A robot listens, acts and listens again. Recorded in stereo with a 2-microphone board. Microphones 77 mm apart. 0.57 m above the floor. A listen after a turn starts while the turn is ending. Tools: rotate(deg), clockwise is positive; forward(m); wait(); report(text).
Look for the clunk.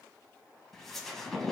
wait()
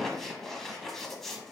wait()
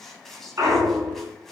rotate(35)
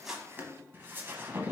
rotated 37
wait()
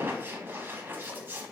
report("I heard a clunk, but can't make it out now. It was about straight ahead or 105° right.")